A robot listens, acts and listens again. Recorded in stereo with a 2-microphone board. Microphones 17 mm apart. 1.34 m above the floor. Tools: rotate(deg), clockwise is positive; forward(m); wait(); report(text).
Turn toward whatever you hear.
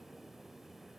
wait()
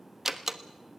rotate(20)
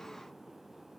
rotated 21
wait()
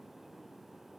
report("I heard a door slam, but can't make it out now. It was about straight ahead or 135° right.")